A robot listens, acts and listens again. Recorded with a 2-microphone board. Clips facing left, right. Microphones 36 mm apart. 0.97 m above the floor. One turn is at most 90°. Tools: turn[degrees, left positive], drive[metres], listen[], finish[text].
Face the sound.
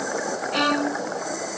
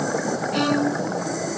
Thought: The violin: about 20° left or 160° left.
Action: turn[20]
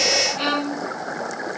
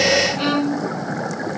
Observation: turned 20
Action: finish[Found it: a violin, straight ahead.]